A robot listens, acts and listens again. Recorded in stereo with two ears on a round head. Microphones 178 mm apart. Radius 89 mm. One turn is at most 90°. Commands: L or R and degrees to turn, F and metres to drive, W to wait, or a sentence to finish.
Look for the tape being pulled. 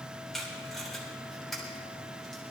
L30
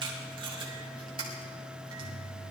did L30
R25
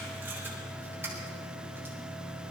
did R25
W
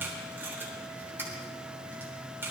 R10
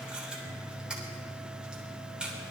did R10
Found it: tape being pulled, straight ahead, 2 to 4 m away.